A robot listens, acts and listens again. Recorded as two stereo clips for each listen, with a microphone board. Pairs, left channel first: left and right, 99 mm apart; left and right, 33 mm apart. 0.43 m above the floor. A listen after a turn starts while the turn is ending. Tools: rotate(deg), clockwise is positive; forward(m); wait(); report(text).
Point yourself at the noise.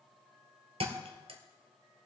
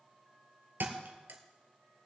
rotate(90)
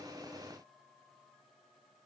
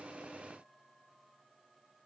report("I heard a thud from this way, but can't make it out now.")